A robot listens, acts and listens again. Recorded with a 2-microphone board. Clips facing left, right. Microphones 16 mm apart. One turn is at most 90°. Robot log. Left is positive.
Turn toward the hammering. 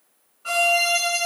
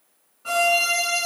cmd idle
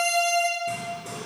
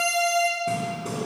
note: The hammering: about 30° right or 150° right.
cmd yaw -30
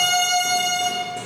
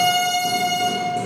cmd idle
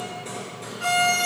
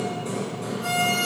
end: Facing the hammering.